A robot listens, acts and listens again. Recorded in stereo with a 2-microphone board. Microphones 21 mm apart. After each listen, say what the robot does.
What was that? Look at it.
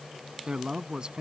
Turn 40° right.
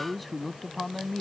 Turn 10° left.
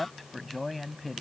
Found it: a man speaking, straight ahead.